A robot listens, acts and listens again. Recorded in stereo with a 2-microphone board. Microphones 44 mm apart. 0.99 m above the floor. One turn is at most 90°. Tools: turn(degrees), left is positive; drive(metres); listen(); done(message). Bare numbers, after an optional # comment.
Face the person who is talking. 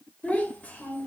# The child speaking: about 35° left or 145° left.
turn(35)
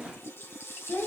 # So it is at 105° left.
turn(90)
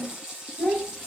# The child speaking is now 15° left.
turn(15)
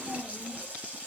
done("Found it: a child speaking, straight ahead.")